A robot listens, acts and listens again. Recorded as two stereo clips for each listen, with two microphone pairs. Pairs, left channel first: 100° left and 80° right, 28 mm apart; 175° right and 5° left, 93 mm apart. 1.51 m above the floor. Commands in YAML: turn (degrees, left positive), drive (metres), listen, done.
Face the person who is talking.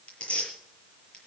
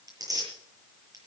listen: true
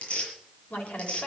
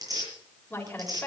turn: 115
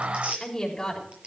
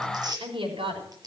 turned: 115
turn: 25
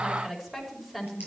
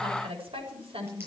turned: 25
done: "Facing the woman speaking."